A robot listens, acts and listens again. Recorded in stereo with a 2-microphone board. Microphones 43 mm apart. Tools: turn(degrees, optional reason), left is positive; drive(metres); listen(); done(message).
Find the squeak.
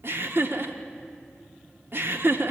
listen()
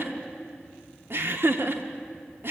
listen()
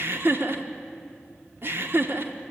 done("I can't make out a squeak to turn to.")